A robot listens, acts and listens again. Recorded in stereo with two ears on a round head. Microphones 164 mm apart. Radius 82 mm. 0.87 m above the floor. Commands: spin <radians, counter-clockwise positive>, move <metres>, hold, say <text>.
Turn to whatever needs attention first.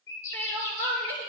spin 0.52
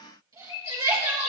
spin -0.35
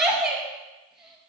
say Found it: crying, straight ahead.